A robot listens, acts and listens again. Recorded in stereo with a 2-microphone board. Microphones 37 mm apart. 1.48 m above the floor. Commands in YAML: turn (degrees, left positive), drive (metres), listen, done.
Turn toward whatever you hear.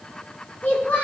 turn: 50
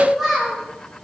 done: "Found it: a child speaking, straight ahead."